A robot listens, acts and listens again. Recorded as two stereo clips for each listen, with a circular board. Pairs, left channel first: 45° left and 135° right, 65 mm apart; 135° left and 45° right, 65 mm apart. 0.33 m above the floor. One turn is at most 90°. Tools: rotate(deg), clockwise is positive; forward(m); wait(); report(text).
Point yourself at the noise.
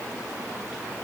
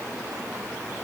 wait()
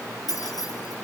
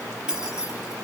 rotate(-35)
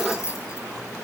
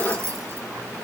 report("Facing the keys jangling, over 4 m away.")